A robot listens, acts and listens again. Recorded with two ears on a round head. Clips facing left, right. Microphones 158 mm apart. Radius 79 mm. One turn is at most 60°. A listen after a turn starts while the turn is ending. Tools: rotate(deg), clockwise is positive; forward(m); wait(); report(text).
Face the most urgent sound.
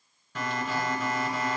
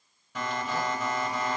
rotate(30)
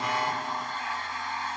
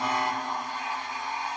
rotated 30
rotate(-20)
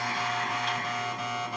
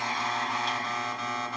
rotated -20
report("Facing the alarm, 2 to 4 m away.")